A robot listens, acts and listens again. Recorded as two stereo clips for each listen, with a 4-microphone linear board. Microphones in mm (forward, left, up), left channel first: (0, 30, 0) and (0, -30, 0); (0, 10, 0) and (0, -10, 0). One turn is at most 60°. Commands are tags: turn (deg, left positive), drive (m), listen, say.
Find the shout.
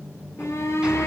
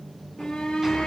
<turn deg="50"/>
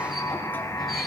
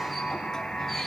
<listen/>
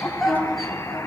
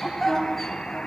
<say>Facing the shout.</say>